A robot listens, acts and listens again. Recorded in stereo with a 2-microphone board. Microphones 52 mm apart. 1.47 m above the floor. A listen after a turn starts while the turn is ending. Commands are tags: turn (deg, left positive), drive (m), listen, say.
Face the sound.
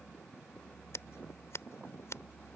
<turn deg="65"/>
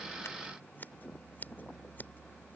<turn deg="40"/>
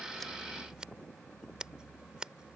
<turn deg="-20"/>
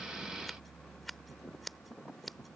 <say>Facing the scissors.</say>